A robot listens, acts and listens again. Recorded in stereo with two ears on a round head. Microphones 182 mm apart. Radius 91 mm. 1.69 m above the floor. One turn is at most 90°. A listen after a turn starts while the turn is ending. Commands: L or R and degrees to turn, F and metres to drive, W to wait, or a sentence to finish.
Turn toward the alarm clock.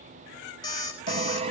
L20
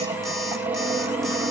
W
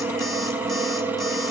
W
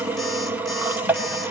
I heard an alarm clock, but can't make it out now. It was about straight ahead or 140° left.